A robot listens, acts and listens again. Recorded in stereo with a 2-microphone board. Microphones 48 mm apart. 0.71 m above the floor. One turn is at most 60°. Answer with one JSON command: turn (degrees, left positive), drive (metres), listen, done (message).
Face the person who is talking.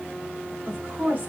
{"turn": -35}
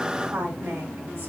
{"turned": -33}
{"turn": -60}
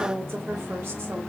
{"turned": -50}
{"turn": -60}
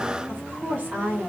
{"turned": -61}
{"turn": -50}
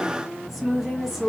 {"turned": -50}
{"done": "Facing the woman speaking, 1 to 2 m away."}